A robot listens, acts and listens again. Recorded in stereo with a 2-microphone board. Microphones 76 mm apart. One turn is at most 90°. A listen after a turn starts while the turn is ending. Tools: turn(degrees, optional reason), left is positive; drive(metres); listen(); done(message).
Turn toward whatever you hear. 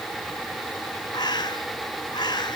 turn(degrees=75, reason="The bird: about 75° left or 105° left.")
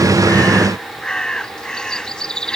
turn(degrees=10, reason="So it is at 10° left.")
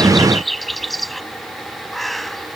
done("Found it: a bird, straight ahead.")